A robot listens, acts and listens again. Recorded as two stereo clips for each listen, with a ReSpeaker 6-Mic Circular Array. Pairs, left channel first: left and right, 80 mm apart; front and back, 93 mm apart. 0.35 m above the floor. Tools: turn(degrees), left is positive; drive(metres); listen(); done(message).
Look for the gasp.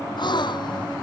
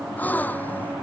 turn(degrees=70)
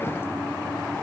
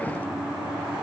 done("I heard a gasp from this way, but can't make it out now.")